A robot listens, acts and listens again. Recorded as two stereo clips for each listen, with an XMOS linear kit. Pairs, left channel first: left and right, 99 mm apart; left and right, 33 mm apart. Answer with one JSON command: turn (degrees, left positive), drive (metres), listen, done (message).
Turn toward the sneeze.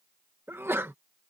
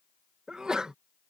{"turn": -25}
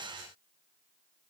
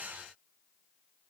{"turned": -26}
{"listen": true}
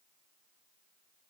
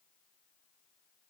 {"done": "I heard a sneeze, but can't make it out now. It was about 5° left or 130° right."}